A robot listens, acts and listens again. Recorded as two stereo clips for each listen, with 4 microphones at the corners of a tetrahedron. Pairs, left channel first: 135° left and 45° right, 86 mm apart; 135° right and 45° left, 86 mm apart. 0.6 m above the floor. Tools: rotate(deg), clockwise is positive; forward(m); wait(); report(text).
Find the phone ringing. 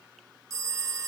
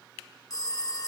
rotate(95)
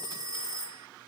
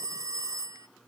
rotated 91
report("Facing the phone ringing.")